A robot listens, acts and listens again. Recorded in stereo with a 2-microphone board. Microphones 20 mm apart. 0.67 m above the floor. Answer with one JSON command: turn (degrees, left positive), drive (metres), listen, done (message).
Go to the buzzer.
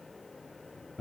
{"listen": true}
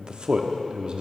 {"listen": true}
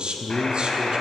{"turn": 55}
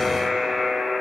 {"drive": 1.0}
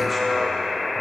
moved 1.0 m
{"drive": 1.0}
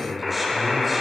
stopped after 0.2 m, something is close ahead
{"done": "Arrived at the buzzer, straight ahead."}